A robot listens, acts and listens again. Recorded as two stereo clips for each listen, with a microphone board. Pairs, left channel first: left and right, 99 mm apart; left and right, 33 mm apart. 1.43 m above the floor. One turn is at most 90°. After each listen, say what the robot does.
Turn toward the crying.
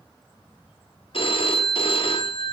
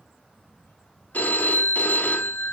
Keep listening.
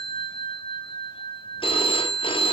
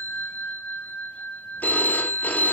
Keep listening.
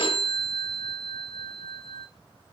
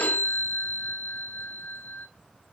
I can't make out crying to turn to.